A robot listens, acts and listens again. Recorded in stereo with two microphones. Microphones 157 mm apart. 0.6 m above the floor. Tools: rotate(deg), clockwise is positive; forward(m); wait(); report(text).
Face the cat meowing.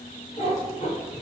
rotate(-50)
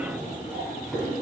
report("Found it: a cat meowing, straight ahead, 1 to 2 m away.")